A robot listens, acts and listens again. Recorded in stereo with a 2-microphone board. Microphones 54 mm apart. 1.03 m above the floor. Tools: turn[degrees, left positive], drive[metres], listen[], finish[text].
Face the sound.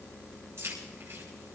Thought: The keys jangling: about 50° right or 130° right.
Action: turn[-50]
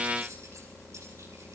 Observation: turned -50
Action: listen[]
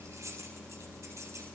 Thought: So it is at 80° right.
Action: turn[-80]
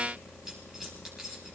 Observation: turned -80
Thought: The keys jangling is now 10° right.
Action: turn[-10]
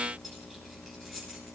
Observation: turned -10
Action: finish[Found it: keys jangling, straight ahead.]